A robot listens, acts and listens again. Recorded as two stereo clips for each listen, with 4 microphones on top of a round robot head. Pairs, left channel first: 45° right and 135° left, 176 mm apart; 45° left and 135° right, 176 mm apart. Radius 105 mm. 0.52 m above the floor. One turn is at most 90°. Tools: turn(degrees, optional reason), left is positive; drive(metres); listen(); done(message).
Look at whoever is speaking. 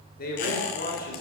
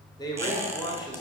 turn(degrees=-20, reason="The man speaking: 20° right.")
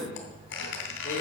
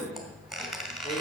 done("Facing the man speaking, 2 to 4 m away.")